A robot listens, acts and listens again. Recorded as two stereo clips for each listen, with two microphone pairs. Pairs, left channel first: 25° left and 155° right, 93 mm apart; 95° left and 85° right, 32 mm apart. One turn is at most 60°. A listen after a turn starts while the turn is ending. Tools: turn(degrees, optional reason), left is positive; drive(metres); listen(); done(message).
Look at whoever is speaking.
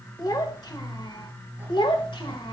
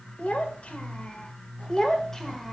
turn(degrees=15, reason="The child speaking: 15° left.")
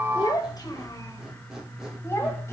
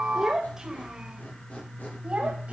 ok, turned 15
turn(degrees=-30, reason="The child speaking is now 30° right.")
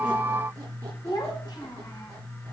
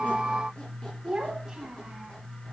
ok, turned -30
turn(degrees=-15, reason="The child speaking is now 15° right.")
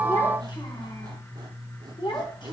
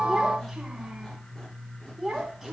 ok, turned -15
done("Facing the child speaking.")